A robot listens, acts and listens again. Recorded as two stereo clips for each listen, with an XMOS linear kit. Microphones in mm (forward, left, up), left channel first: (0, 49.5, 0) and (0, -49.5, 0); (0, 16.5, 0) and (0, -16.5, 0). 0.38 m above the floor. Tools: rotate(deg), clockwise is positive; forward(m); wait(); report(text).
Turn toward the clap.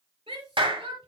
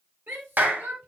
rotate(60)
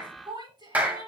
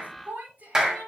rotate(20)
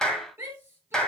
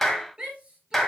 rotate(-10)
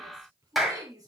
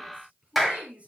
report("Found it: a clap, straight ahead, 1 to 2 m away.")